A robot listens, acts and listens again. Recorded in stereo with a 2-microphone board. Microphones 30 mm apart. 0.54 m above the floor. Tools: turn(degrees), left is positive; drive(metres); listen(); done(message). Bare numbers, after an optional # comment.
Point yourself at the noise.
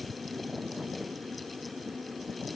listen()
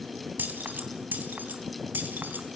turn(-90)
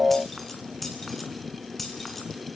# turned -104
done("Found it: keys jangling, straight ahead, over 4 m away.")